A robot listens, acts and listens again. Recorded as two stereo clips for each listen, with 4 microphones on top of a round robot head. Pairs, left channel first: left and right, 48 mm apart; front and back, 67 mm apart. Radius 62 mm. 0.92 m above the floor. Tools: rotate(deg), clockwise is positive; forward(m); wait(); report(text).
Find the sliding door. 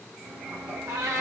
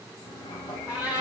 rotate(50)
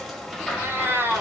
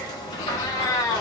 report("Found it: a sliding door, straight ahead.")